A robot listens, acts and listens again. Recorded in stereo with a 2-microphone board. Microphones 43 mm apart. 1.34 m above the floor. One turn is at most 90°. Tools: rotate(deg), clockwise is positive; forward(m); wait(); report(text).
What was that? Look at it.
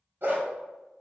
rotate(55)
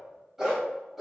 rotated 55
report("Found it: a dog barking, straight ahead.")